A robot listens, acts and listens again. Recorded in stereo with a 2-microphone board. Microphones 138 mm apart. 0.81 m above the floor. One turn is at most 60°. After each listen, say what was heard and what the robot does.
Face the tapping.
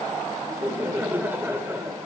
Keep listening.
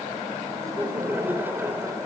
Keep listening.
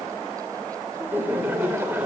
I can't make out tapping to turn to.